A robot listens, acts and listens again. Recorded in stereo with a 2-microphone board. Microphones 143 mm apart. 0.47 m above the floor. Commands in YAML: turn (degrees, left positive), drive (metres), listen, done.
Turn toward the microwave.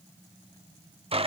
listen: true
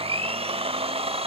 listen: true
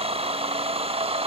done: "I can't make out a microwave, only a blender."